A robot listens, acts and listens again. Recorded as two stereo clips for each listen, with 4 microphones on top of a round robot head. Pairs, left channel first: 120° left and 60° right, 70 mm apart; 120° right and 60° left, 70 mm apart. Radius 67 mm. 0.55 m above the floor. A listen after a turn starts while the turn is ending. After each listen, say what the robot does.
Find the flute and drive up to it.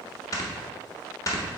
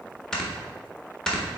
Keep listening.
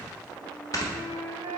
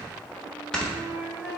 Turn 10° right.
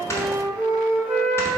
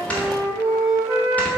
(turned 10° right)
Drive 1.0 m forward.
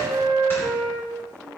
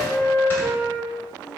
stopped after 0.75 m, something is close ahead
Turn 10° left.
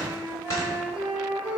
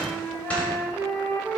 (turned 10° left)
I am next to the flute.